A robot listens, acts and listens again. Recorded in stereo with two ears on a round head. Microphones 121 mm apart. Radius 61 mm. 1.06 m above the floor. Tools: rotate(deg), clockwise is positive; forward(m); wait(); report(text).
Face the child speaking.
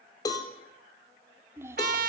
rotate(20)
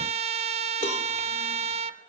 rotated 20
wait()
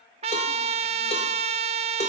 wait()
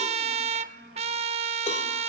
rotate(95)
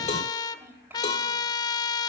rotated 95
rotate(15)
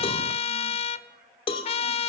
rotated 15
wait()
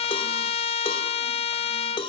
wait()
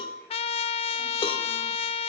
report("Facing where the child speaking came from. I can't hear it now.")